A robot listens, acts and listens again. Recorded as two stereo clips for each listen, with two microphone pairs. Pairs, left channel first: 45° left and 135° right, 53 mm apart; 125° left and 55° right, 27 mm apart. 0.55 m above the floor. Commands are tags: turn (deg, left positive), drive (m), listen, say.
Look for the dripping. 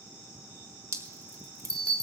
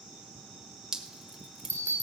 <turn deg="-125"/>
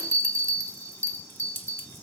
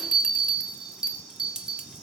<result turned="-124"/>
<say>Found it: dripping, straight ahead.</say>